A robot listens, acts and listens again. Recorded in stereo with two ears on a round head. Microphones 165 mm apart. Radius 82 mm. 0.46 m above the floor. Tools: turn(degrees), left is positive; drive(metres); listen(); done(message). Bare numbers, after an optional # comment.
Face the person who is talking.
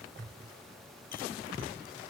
listen()
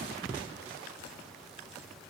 listen()
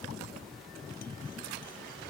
done("I can't make out anyone speaking.")